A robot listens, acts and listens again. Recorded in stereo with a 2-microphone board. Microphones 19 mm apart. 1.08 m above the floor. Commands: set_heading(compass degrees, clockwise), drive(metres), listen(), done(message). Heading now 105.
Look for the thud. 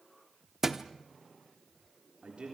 set_heading(125)
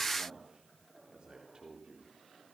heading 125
listen()
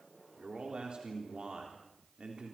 done("I heard a thud, but can't make it out now. It was about straight ahead or 140° right.")